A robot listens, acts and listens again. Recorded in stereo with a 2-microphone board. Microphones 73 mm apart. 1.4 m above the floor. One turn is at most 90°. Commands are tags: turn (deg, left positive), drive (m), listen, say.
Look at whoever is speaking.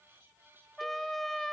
<listen/>
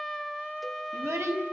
<turn deg="-40"/>
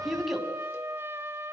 <say>Found it: a child speaking, straight ahead, over 4 m away.</say>